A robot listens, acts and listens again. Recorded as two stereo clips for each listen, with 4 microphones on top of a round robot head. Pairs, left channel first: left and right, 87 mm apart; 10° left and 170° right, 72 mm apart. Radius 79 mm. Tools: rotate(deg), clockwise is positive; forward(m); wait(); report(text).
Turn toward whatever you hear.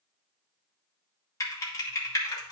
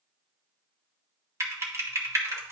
rotate(-145)
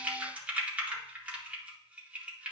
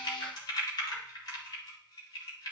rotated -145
rotate(15)
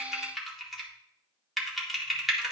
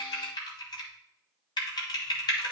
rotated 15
report("Facing the typing on a keyboard.")